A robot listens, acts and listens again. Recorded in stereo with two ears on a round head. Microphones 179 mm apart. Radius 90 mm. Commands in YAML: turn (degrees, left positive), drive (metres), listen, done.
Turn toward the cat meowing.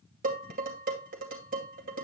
listen: true
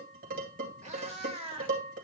turn: -30
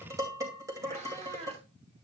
turn: -35
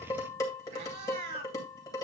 turn: -125
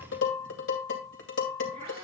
listen: true
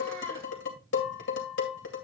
listen: true
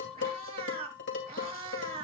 turn: -30
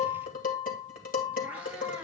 listen: true
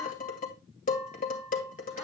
listen: true
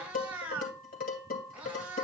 done: "Facing the cat meowing, 2 to 4 m away."